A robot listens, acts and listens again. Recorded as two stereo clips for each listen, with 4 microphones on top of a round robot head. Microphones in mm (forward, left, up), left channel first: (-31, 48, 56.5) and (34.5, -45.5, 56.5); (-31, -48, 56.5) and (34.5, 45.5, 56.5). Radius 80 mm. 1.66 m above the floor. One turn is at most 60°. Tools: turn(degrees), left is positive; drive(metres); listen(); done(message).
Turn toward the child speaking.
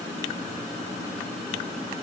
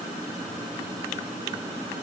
listen()
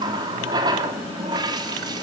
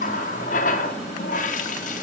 listen()
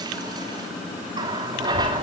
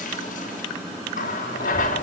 turn(degrees=60)
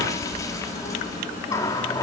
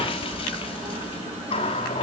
turn(degrees=60)
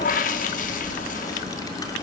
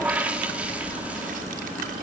turn(degrees=60)
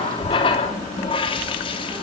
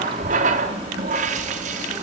done("Facing the child speaking, 2 to 4 m away.")